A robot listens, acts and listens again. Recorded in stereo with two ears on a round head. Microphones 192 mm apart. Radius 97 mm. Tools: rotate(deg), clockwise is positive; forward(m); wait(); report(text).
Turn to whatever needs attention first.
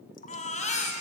rotate(-35)
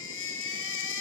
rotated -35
rotate(-110)
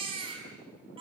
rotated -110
rotate(25)
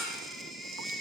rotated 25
report("Found it: a baby crying, straight ahead.")